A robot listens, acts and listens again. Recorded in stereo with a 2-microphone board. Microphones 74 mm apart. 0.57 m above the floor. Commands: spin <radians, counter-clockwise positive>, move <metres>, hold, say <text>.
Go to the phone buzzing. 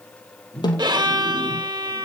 spin -0.52
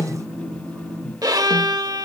spin -2.36
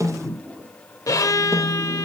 spin -0.44
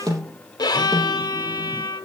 hold
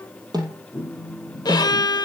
move 1.0
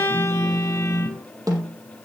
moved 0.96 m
move 1.0
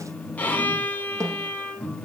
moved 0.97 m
move 1.0
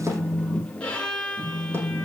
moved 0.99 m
move 1.0
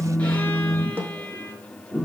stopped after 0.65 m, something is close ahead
spin -0.26
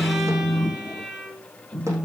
say Arrived at the phone buzzing, straight ahead.